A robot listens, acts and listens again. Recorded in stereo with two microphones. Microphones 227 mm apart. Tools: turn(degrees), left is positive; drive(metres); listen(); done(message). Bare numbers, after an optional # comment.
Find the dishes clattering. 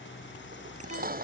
# The dishes clattering: about 40° right or 140° right.
turn(-40)
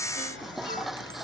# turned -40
done("Found it: dishes clattering, straight ahead.")